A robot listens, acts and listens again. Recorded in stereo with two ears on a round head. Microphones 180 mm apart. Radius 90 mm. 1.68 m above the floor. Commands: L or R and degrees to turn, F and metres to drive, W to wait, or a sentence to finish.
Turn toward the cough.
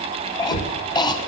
L20
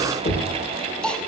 Facing the cough, 1 to 2 m away.